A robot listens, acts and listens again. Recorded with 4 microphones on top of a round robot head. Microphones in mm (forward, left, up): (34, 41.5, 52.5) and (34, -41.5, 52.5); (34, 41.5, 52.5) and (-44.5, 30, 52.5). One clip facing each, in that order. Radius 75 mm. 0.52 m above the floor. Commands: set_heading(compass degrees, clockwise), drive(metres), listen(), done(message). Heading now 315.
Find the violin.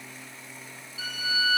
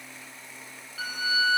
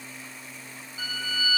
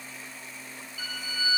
set_heading(10)
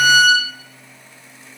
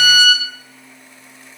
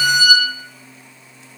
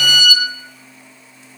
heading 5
done("Facing the violin.")